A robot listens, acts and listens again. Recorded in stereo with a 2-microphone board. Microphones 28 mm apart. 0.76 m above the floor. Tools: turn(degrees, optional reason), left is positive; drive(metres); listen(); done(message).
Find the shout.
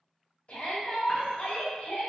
turn(degrees=50, reason="The shout: about 50° left or 130° left.")
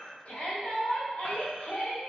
turn(degrees=70, reason="So it is at 70° left.")
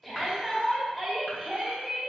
done("Found it: a shout, straight ahead.")